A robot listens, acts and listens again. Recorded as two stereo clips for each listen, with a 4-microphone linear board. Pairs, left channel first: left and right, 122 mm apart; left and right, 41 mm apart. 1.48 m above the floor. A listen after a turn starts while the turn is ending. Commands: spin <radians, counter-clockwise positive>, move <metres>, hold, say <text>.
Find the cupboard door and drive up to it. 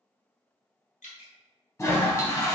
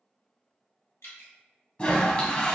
hold
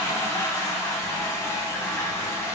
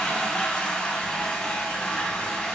hold
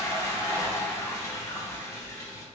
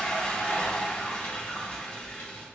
say I can't make out a cupboard door, only dripping and a toilet flushing.